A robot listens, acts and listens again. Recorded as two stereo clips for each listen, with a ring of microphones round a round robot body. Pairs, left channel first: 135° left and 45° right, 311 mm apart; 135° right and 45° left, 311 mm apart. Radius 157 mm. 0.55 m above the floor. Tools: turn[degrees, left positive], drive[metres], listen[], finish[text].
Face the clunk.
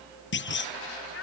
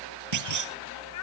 Thought: The clunk: 80° left.
Action: turn[80]
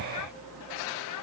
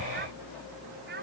Action: finish[I heard a clunk from this way, but can't make it out now.]